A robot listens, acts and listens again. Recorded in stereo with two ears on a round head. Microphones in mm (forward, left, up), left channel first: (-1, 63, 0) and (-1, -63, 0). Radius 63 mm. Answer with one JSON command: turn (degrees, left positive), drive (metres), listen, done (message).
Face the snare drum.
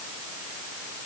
{"listen": true}
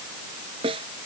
{"turn": -45}
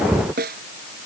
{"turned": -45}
{"turn": -95}
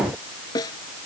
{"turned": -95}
{"turn": 30}
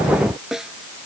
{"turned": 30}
{"done": "Found it: a snare drum, straight ahead."}